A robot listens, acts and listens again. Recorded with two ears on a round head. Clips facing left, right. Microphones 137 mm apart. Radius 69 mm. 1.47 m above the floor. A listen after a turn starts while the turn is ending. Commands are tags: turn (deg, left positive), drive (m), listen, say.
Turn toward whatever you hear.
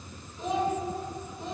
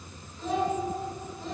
<turn deg="15"/>
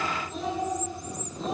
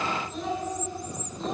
<turn deg="30"/>
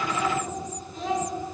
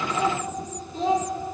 <turn deg="-25"/>
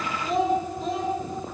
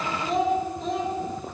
<say>Found it: a child speaking, straight ahead, 2 to 4 m away.</say>